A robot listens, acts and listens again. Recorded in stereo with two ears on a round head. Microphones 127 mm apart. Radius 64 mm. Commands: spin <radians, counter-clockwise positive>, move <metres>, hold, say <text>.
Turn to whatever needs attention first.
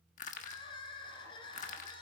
spin 0.61
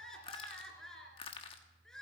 say Facing the crying, 2 to 4 m away.